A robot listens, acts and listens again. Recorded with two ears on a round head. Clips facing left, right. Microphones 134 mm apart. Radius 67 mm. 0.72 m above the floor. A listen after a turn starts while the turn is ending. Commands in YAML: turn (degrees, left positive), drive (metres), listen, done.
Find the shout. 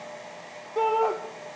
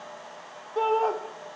turn: 30
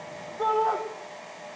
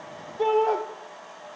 turn: -30
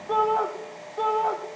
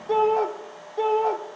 turn: -20
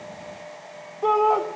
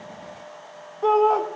done: "Facing the shout, 1 to 2 m away."